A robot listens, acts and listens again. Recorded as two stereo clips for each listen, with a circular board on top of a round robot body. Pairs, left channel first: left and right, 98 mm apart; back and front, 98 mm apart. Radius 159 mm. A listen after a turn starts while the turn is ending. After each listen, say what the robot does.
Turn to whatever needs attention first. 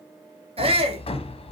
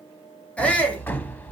Turn 100° right.
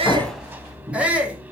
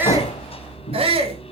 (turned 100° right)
Turn 15° right.
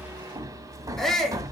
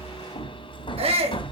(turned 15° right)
Facing the shout, 2 to 4 m away.